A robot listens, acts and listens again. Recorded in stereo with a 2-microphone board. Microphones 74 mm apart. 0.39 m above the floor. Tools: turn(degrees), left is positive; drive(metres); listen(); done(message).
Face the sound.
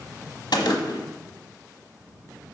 turn(degrees=90)
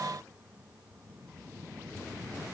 done("Facing where the gunshot came from. I can't hear it now.")